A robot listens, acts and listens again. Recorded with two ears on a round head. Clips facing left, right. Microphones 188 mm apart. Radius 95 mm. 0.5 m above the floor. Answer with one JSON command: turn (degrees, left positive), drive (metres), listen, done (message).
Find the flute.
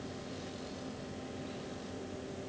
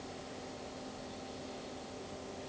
{"listen": true}
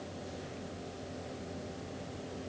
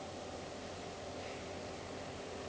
{"listen": true}
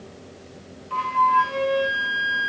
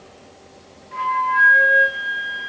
{"turn": 90}
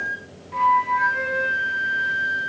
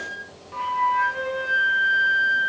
{"done": "Facing the flute, over 4 m away."}